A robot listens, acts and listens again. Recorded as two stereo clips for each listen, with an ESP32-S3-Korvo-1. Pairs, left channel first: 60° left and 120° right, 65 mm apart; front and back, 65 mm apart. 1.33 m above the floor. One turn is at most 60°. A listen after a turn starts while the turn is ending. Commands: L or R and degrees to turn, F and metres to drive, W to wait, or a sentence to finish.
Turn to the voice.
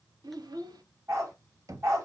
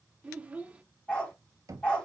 R60
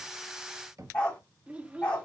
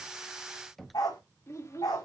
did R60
R50
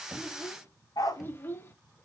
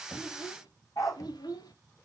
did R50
Found it: a child speaking, straight ahead, 1 to 2 m away.